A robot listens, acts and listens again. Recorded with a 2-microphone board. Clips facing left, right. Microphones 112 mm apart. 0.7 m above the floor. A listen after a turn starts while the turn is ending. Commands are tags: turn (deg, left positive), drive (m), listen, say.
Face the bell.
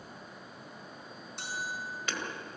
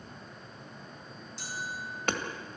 <turn deg="60"/>
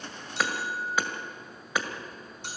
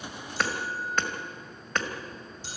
<turn deg="60"/>
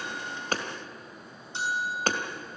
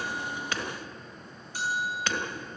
<turn deg="25"/>
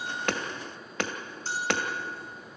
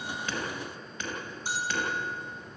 <turn deg="-15"/>
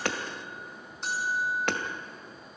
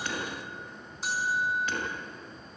<say>Found it: a bell, straight ahead.</say>